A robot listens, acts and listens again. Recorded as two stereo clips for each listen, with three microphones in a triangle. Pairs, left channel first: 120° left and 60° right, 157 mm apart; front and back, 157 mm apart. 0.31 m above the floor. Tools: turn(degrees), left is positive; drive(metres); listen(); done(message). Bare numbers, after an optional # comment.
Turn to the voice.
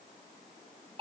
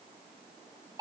listen()
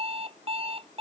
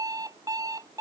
listen()
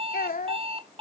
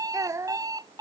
# The child speaking: 115° left.
turn(115)
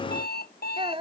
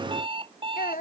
# The child speaking is now 10° right.
turn(-10)
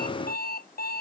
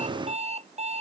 listen()
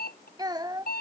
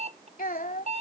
done("Found it: a child speaking, straight ahead.")